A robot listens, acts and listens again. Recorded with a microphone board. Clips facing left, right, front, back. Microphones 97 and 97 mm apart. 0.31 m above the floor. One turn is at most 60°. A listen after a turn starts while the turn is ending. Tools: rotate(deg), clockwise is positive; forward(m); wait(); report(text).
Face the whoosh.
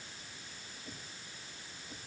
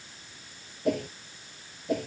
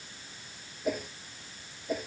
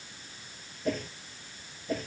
rotate(60)
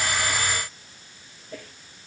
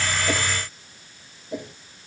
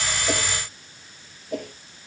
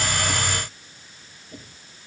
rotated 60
rotate(20)
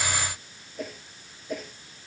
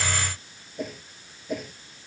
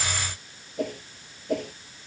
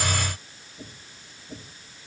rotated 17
report("Found it: a whoosh, straight ahead.")